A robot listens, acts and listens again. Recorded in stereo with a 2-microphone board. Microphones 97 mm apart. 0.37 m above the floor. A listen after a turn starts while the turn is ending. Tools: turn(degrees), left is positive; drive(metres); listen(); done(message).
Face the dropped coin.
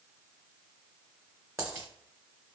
turn(degrees=-25)
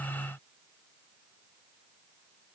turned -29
listen()
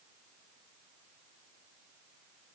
done("I heard a dropped coin, but can't make it out now. It was about 5° left or 125° right.")